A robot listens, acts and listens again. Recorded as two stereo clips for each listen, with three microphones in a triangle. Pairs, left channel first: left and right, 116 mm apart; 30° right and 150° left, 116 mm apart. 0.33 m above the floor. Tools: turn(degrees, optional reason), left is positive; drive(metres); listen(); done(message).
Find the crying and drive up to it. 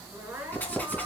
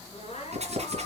turn(degrees=-10, reason="The crying: 10° right.")
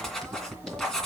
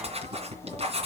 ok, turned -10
listen()
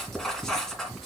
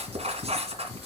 listen()
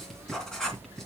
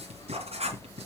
done("I heard crying from this way, but can't make it out now. I did not reach it.")